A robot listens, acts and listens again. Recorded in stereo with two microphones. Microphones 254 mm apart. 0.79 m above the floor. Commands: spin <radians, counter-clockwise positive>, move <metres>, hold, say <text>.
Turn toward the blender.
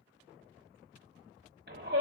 hold
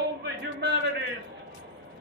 hold
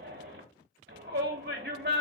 say I can't make out a blender, only a shout.